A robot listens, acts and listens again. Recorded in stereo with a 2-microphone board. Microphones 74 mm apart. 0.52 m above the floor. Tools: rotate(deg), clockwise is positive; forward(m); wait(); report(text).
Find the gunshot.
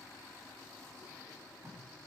wait()
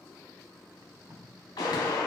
rotate(-90)
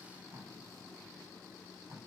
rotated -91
report("Facing where the gunshot came from. I can't hear it now.")